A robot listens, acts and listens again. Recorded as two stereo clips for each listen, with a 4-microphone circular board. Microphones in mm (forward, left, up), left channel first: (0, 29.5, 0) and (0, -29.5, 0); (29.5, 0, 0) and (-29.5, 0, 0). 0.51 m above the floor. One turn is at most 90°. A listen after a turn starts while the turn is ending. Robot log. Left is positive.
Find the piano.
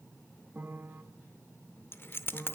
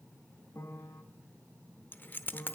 note: The piano: 35° right.
cmd yaw -35
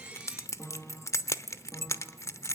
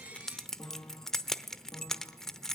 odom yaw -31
end: Facing the piano, 1 to 2 m away.